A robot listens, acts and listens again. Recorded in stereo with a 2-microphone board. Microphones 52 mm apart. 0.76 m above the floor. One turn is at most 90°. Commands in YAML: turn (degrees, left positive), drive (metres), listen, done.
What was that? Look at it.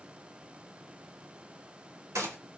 turn: -90
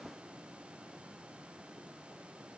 done: "I heard a gunshot from this way, but can't make it out now."